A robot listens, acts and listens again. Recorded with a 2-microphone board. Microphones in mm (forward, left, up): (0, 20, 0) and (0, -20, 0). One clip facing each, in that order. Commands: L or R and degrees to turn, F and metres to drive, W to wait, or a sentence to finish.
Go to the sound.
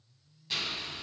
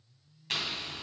R65
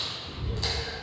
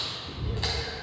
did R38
R30
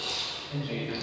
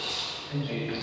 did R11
R20
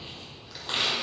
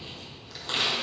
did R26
F1.0
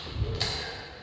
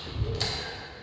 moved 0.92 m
F1.0
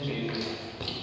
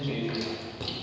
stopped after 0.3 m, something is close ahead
L10
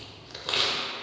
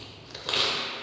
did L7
Arrived at the chewing, straight ahead.